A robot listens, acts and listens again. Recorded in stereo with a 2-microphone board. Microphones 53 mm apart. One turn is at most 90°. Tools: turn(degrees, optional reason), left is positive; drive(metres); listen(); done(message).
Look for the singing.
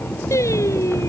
turn(degrees=70, reason="The singing: about 70° left or 110° left.")
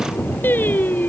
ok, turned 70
turn(degrees=35, reason="So it is at 35° left.")
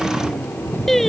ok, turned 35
done("Found it: singing, straight ahead.")